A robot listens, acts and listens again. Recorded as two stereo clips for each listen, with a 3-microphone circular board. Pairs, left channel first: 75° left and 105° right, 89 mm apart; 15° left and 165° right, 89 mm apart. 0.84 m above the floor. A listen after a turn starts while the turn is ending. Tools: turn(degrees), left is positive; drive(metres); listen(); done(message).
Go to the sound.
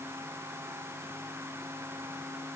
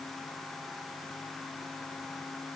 listen()
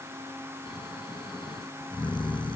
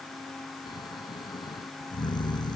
turn(degrees=50)
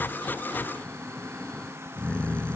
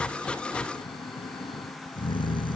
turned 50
drive(metres=1.0)
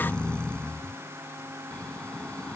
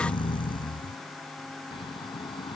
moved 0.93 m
drive(metres=1.0)
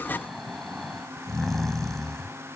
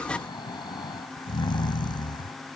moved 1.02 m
turn(degrees=-15)
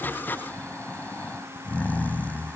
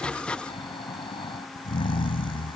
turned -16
drive(metres=1.0)
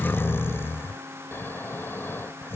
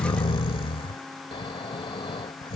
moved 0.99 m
turn(degrees=10)
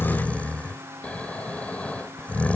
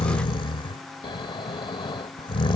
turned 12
drive(metres=1.0)
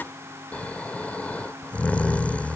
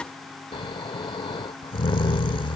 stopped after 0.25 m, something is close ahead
done("I am next to the snoring.")